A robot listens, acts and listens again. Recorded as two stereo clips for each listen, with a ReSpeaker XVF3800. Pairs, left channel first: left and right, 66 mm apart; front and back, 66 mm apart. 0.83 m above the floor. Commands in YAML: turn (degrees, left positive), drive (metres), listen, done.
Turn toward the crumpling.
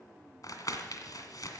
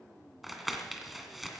turn: 90
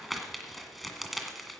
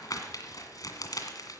done: "Found it: crumpling, straight ahead."